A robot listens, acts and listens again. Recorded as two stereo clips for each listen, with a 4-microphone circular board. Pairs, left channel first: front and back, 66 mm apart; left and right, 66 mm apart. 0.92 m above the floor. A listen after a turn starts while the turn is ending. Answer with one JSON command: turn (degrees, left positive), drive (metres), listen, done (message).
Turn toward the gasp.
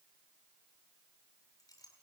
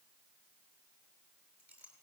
{"listen": true}
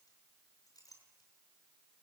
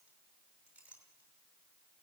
{"listen": true}
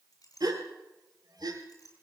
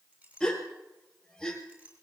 {"turn": 170}
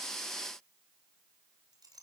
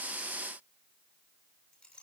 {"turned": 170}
{"done": "I heard a gasp from this way, but can't make it out now."}